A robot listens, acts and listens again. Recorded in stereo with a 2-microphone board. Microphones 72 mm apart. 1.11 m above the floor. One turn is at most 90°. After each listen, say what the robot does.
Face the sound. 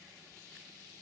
Keep listening.
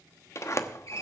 Turn 40° left.
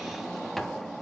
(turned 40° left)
Found it: a sliding door, straight ahead, 1 to 2 m away.